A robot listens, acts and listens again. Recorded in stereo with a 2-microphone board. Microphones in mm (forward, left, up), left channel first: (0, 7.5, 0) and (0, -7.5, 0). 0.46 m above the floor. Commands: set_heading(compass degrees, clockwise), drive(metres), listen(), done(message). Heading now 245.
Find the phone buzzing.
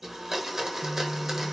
set_heading(275)
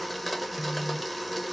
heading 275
set_heading(255)
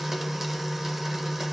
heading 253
done("Found it: a phone buzzing, straight ahead.")